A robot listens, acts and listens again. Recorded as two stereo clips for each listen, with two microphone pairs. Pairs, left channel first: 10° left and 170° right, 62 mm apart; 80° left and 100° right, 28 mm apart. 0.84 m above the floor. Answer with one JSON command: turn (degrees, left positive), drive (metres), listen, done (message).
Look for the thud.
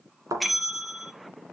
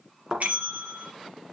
{"turn": -165}
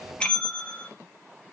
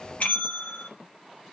{"done": "Facing where the thud came from. I can't hear it now."}